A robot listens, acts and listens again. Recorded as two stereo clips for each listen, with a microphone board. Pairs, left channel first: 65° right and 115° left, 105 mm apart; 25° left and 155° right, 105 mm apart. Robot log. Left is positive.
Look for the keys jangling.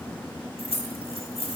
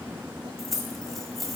note: The keys jangling: 70° right.
cmd yaw -70
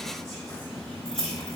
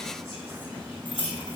note: The keys jangling is now 15° right.
cmd yaw -15
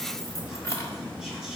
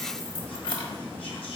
note: The keys jangling is now 10° right.
cmd yaw -10
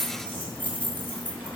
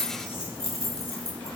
end: Facing the keys jangling, 1 to 2 m away.